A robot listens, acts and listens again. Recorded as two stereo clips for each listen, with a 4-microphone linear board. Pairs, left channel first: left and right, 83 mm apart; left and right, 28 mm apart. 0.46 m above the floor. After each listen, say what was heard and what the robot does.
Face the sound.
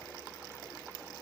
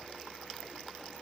Keep listening.
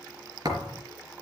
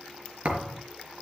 The thud: about 50° right or 130° right. Turn 50° right.
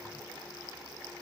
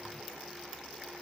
Keep listening.
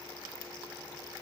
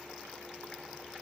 I heard a thud, but can't make it out now. It was about straight ahead or 80° right.